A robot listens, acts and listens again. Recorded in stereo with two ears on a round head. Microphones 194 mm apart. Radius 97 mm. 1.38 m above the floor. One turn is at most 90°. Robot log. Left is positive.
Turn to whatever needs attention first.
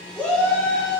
cmd yaw +30
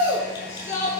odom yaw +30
note: So it is at 145° left.
cmd yaw +90
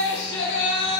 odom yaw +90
note: The shout is now 60° left.
cmd yaw +60
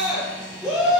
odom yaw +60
end: Facing the shout.